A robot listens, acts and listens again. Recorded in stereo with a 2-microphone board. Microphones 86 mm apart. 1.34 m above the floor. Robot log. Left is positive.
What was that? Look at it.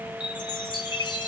note: The chime: about 60° left or 120° left.
cmd yaw +60
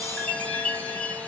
note: So it is at 15° left.
cmd yaw +15
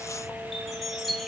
end: Found it: a chime, straight ahead, 1 to 2 m away.